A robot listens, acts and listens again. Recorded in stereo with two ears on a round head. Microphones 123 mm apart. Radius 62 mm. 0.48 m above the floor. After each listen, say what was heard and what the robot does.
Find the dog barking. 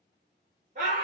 Keep listening.
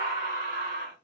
Keep listening.
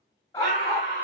The dog barking: about 25° left or 155° left. Turn 25° left.
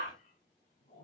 Keep listening.
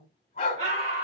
So it is at 135° left. Turn 135° left.
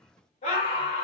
Keep listening.
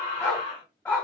The dog barking is now 10° left. Turn 10° left.
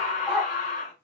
Facing the dog barking.